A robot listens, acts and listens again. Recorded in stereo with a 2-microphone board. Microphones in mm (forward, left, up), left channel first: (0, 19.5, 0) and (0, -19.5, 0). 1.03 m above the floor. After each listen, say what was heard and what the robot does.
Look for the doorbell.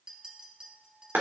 Keep listening.
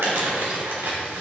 Keep listening.
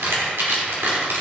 I can't make out a doorbell, only a clink and crumpling.